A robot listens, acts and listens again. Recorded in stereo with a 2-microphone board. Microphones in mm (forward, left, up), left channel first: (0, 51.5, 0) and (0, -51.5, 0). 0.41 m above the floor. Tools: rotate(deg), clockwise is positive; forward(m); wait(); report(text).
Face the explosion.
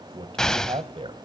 rotate(-30)
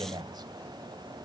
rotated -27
wait()
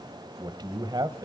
report("I heard an explosion, but can't make it out now. It was about 20° right or 145° left.")